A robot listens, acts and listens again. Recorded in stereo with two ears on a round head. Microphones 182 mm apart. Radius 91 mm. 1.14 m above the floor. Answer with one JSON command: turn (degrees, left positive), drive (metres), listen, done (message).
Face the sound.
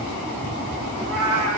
{"turn": -65}
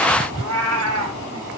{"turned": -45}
{"turn": -75}
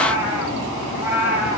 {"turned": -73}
{"turn": -10}
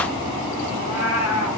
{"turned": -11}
{"done": "Facing the cat meowing."}